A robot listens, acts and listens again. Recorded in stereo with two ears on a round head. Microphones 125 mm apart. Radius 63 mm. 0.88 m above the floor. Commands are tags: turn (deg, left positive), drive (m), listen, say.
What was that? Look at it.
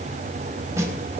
<turn deg="-20"/>
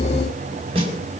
<turn deg="-140"/>
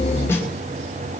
<listen/>
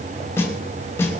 <turn deg="20"/>
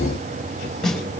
<say>Found it: a snare drum, straight ahead.</say>